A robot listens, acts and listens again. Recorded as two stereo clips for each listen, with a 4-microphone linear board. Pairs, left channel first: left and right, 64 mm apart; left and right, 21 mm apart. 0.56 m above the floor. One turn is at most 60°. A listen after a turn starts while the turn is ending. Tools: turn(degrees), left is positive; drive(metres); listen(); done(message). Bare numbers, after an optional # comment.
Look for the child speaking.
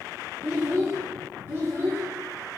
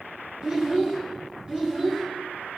# The child speaking: about 40° right or 140° right.
turn(-40)
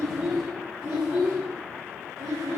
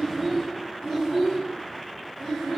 done("Found it: a child speaking, straight ahead, 2 to 4 m away.")